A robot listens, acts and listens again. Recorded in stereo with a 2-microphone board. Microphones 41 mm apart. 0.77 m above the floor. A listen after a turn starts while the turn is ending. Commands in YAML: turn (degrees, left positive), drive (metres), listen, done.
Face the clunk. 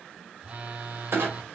turn: -75
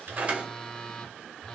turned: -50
turn: -30
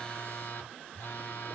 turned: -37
done: "Facing where the clunk came from. I can't hear it now."